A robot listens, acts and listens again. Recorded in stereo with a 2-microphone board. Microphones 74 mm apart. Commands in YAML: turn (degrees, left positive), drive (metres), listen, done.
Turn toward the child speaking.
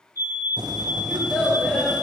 turn: -15
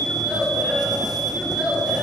turn: -30
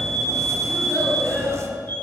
turn: 20
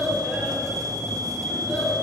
done: "Facing the child speaking, over 4 m away."